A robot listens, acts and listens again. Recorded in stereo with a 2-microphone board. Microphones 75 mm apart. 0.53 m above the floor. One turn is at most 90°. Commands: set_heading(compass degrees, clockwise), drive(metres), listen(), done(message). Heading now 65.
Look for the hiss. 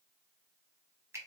listen()
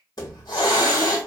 set_heading(0)
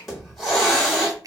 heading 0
done("Found it: a hiss, straight ahead.")